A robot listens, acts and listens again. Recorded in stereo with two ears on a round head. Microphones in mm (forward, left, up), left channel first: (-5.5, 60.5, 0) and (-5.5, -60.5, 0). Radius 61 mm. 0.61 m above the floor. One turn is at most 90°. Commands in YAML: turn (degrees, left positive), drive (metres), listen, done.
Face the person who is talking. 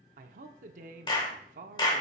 turn: -60
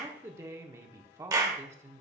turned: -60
turn: -25
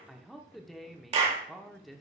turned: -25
done: "Found it: a man speaking, straight ahead."